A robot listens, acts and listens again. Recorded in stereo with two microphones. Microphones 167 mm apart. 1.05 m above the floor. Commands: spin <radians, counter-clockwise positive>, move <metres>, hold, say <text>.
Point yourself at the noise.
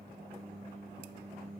hold
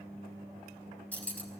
spin 0.52
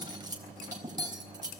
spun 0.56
spin -0.44
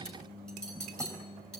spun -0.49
say Found it: cutlery clinking, straight ahead, 2 to 4 m away.